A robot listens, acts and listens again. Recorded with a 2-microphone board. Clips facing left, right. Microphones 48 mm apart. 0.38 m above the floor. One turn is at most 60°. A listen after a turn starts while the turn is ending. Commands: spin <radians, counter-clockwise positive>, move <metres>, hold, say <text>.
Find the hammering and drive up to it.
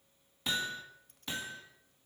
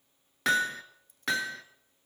spin -1.05
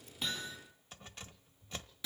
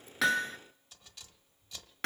spin -0.96
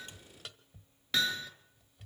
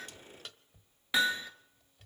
spin -0.26
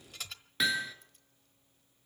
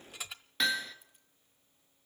move 1.0
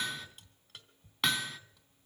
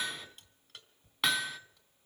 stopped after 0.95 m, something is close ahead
say I am next to the hammering.